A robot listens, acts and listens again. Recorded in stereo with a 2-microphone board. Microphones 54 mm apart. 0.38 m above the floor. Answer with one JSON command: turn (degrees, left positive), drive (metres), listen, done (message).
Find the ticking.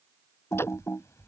{"turn": 50}
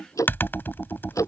{"turn": 80}
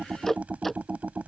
{"done": "Facing the ticking."}